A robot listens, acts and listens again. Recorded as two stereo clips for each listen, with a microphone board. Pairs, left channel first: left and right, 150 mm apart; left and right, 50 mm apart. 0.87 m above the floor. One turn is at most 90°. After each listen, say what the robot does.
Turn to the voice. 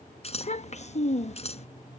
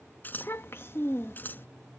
Turn 50° left.
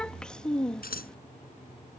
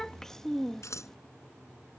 Found it: a child speaking, straight ahead.